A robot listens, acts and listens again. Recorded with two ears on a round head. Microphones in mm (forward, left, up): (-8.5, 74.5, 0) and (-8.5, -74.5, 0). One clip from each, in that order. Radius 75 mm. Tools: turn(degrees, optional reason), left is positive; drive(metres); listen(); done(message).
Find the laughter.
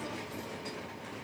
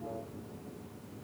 listen()
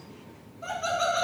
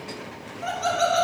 turn(degrees=-50, reason="The laughter: about 50° right or 130° right.")
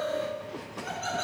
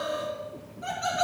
turn(degrees=-15, reason="So it is at 15° right.")
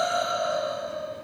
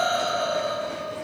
done("Found it: laughter, straight ahead.")